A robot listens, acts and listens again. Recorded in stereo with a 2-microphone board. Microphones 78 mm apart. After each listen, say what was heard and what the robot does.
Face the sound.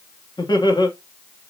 The laughter: about 70° left or 110° left. Turn 70° left.
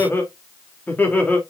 So it is at 20° left. Turn 20° left.
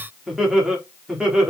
The laughter is now 10° right. Turn 10° right.
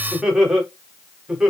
The laughter is now 10° right. Turn 10° right.
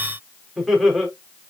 Found it: laughter, straight ahead, over 4 m away.